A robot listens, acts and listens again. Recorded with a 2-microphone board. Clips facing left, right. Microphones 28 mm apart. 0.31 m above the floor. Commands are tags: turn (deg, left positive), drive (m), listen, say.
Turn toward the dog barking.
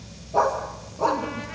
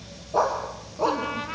<turn deg="-15"/>
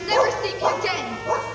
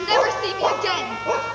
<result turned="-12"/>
<turn deg="-35"/>
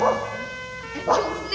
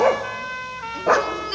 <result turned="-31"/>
<turn deg="-100"/>
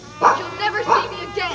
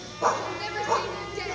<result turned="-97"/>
<turn deg="40"/>
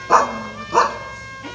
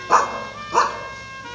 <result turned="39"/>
<say>Facing the dog barking.</say>